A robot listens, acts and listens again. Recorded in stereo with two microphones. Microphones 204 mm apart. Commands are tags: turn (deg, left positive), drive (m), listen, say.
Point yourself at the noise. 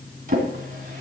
<turn deg="-40"/>
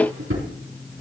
<turn deg="-100"/>
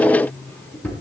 <turn deg="10"/>
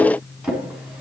<say>Found it: a drawer, straight ahead, 2 to 4 m away.</say>